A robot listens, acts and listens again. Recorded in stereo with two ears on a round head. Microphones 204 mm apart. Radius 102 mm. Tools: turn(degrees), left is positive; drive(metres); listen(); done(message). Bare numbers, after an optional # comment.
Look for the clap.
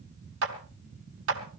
# The clap: about 60° right or 120° right.
turn(-60)
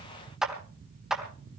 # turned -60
done("Found it: a clap, straight ahead, 2 to 4 m away.")